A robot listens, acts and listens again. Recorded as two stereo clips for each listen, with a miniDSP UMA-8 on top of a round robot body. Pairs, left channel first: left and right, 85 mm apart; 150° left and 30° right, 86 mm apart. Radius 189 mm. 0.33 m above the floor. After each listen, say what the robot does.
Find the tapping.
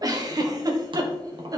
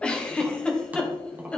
Turn 100° right.
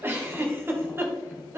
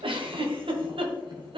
Keep listening.
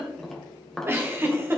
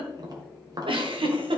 Facing the tapping.